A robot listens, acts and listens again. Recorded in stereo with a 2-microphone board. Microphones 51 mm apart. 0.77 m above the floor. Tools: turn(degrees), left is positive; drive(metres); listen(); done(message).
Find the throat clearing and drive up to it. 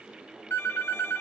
listen()
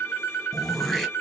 turn(degrees=30)
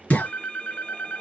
turn(degrees=150)
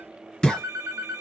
turn(degrees=15)
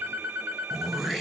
drive(metres=1.0)
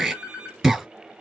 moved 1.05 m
turn(degrees=-10)
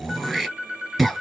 drive(metres=1.0)
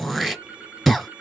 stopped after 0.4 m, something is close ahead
done("I am next to the throat clearing.")